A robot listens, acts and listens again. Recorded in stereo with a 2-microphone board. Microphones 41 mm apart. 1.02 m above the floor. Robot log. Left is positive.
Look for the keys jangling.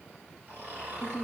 cmd idle
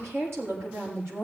cmd idle
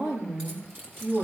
note: The keys jangling: about 50° right or 130° right.
cmd yaw -50
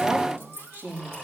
note: So it is at 80° right.
cmd yaw -80
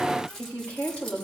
note: The keys jangling is now 10° left.
cmd yaw +10
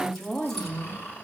cmd idle
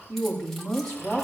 cmd idle
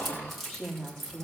end: Facing the keys jangling.